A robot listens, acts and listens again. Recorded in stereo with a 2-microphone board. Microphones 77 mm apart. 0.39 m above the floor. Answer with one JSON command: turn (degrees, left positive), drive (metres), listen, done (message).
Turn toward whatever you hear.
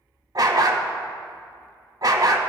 {"turn": -55}
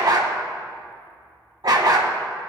{"turn": -65}
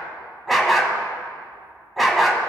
{"done": "Found it: a dog barking, straight ahead."}